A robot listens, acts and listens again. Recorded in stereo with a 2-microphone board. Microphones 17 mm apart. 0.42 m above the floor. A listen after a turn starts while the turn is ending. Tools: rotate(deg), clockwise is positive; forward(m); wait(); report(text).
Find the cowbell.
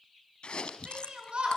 wait()
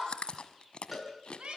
rotate(30)
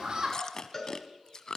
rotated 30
rotate(-20)
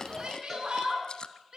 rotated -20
wait()
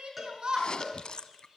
report("Facing the cowbell, over 4 m away.")